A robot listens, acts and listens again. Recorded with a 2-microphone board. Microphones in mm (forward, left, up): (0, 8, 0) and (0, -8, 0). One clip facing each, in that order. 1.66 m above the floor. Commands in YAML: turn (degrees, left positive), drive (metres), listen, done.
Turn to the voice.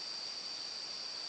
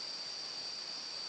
listen: true
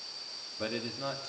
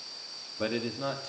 turn: -30
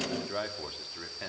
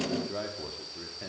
turn: 30
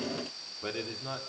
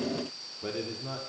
turn: 20
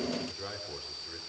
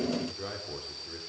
done: "Facing the man speaking, over 4 m away."